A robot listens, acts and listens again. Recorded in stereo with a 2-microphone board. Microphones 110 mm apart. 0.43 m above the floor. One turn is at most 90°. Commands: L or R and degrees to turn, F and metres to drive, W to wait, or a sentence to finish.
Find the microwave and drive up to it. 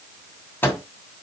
L20
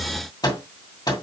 L90
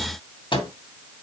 L50
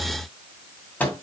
L15
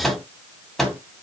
F1.0
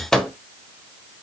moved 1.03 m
F1.0
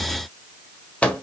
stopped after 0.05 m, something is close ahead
L10
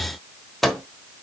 I am next to the microwave.